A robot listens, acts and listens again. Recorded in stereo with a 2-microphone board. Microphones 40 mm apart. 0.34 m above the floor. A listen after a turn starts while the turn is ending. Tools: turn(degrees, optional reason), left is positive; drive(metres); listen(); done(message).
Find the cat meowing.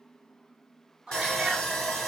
turn(degrees=-25, reason="The cat meowing: about 25° right or 155° right.")
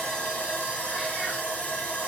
listen()
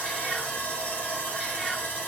listen()
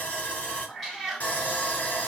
done("Found it: a cat meowing, straight ahead, 1 to 2 m away.")